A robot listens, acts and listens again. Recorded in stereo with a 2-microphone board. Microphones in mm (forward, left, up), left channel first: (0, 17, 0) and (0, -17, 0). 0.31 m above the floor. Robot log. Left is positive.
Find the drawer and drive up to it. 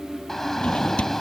note: The drawer: about 30° left or 150° left.
cmd yaw +30
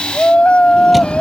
cmd idle
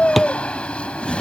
cmd fwd 1.0
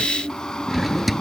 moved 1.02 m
cmd fwd 1.0
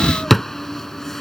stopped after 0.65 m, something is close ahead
end: Arrived at the drawer, straight ahead.